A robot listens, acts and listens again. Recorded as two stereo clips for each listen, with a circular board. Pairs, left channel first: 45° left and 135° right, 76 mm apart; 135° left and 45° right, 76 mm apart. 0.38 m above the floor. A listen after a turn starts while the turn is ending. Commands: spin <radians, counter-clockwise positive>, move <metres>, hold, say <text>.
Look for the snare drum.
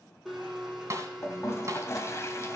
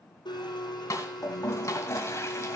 spin 3.14
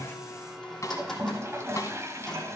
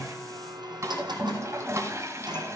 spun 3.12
say Found it: a snare drum, straight ahead.